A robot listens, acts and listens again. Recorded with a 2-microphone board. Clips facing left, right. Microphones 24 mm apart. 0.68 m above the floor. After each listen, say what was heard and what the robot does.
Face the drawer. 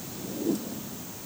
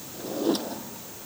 The drawer: about 60° right or 120° right. Turn 60° right.
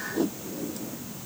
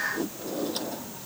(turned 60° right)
So it is at 60° right. Turn 60° right.
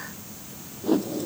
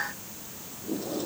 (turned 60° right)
The drawer is now 15° right. Turn 15° right.
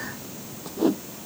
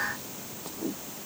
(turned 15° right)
Keep listening.
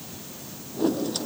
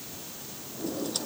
Found it: a drawer, straight ahead.